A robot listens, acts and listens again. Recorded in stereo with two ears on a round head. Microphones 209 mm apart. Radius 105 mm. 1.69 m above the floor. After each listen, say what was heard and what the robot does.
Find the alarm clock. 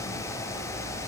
Keep listening.
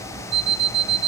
The alarm clock: about 45° right or 135° right. Turn 45° right.
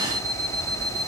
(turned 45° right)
So it is at 15° right. Turn 15° right.
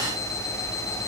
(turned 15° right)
Facing the alarm clock.